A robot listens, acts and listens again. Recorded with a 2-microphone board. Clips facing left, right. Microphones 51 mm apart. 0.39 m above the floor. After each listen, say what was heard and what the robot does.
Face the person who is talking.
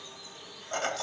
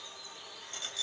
Keep listening.
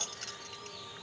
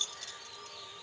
Keep listening.
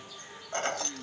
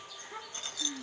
The child speaking: about 70° right or 110° right. Turn 70° right.
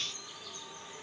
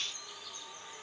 Keep listening.
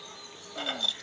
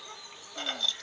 Keep listening.
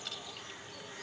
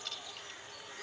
I heard a child speaking, but can't make it out now. It was about straight ahead or 40° right.